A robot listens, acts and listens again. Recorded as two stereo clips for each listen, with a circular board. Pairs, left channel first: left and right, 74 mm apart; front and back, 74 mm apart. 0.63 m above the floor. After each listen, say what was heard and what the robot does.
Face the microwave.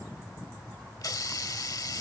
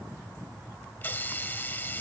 Keep listening.
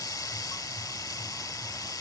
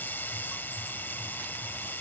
Keep listening.
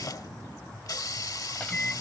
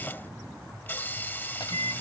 The microwave: 15° left. Turn 15° left.
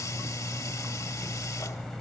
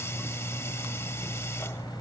Facing the microwave.